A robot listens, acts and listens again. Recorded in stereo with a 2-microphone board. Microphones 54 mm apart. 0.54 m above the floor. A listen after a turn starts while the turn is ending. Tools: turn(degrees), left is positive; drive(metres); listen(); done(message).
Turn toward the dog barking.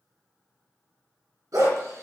turn(degrees=-90)
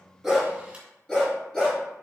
turn(degrees=10)
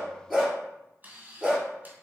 done("Facing the dog barking.")